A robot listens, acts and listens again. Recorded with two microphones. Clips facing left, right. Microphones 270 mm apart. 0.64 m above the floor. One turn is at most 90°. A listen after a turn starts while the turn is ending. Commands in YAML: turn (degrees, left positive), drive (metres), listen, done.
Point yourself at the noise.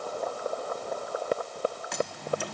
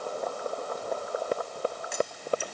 turn: 70
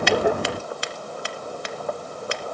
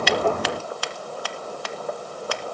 turn: 25
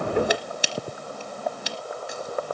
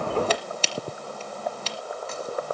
turn: 15
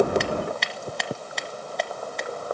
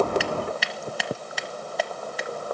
done: "Found it: scissors, straight ahead, 1 to 2 m away."